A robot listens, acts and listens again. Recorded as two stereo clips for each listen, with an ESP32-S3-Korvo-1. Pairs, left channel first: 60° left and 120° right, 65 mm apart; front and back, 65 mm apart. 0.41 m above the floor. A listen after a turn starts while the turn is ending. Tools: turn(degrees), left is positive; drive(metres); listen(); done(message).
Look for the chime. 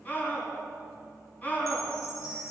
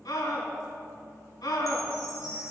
turn(degrees=30)
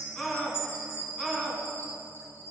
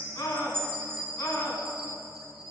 done("Facing the chime, 2 to 4 m away.")